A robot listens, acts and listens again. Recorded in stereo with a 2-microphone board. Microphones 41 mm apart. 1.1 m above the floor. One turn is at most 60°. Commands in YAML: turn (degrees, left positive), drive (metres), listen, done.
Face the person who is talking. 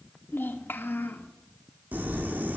turn: 60
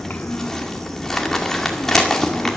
listen: true
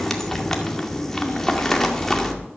listen: true
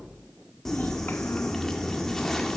done: "I heard a child speaking, but can't make it out now. It was about straight ahead or 60° left."